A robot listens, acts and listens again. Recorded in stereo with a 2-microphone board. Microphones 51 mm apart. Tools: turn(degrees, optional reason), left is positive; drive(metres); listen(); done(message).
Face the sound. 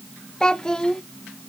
turn(degrees=30)
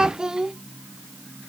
turn(degrees=-15, reason="So it is at 15° right.")
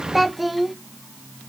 done("Facing the child speaking.")